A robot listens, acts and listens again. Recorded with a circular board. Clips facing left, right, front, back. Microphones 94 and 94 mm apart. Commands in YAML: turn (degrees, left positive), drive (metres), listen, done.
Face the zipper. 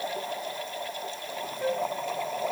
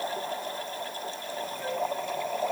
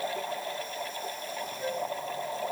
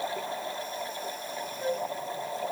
listen: true
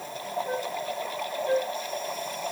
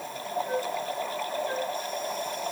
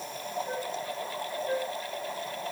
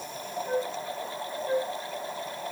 listen: true
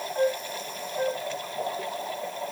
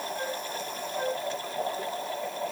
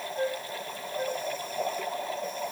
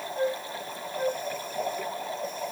done: "I can't make out a zipper to turn to."